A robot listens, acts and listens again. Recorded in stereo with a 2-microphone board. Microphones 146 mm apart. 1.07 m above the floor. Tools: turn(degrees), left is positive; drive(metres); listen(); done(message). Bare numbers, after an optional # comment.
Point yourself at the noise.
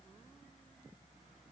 listen()
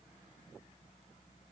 listen()
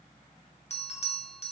# The bell: about 50° left or 130° left.
turn(50)
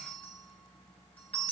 # So it is at 15° left.
turn(15)
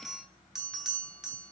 done("Facing the bell.")